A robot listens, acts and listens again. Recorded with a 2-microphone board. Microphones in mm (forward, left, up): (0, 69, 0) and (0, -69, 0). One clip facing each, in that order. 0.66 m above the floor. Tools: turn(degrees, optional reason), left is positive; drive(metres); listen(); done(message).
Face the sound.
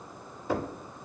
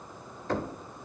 turn(degrees=30)
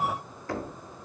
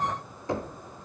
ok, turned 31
turn(degrees=-20, reason="So it is at 20° right.")
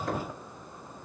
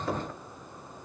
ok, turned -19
done("Facing the knocking.")